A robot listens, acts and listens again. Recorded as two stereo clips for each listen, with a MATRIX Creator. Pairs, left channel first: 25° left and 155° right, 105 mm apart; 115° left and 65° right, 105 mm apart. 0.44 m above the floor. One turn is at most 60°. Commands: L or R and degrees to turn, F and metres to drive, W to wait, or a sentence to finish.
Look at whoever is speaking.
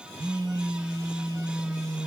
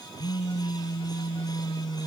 W
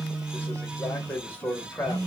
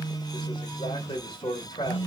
L60
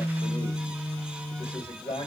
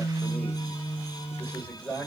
L35
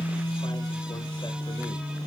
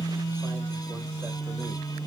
W
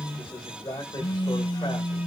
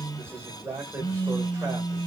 Found it: a man speaking, straight ahead, 1 to 2 m away.